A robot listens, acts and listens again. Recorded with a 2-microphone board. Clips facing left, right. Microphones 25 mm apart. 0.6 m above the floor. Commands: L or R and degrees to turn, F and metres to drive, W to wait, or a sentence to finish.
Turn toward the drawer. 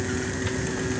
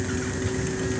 W
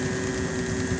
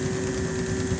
W
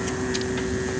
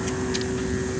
I can't make out a drawer to turn to.